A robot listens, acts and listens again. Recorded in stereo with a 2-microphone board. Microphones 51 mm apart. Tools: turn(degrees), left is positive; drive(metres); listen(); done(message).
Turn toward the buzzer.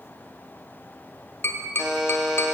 turn(degrees=-15)
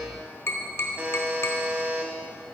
turn(degrees=-150)
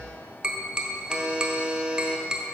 turn(degrees=-25)
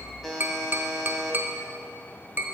done("Found it: a buzzer, straight ahead, 1 to 2 m away.")